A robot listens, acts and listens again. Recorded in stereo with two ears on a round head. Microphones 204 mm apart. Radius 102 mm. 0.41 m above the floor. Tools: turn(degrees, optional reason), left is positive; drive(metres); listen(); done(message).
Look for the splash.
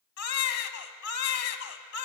listen()
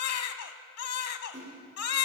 turn(degrees=-30, reason="The splash: about 30° right or 150° right.")
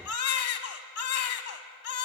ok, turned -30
listen()
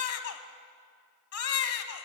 done("I heard a splash, but can't make it out now. It was about straight ahead or 120° right.")